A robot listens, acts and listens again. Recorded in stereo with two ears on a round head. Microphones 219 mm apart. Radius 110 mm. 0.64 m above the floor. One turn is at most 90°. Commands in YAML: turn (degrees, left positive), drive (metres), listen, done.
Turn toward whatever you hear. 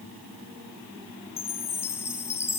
turn: 30
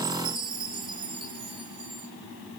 turn: -20
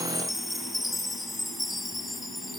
done: "Found it: a chime, straight ahead, 2 to 4 m away."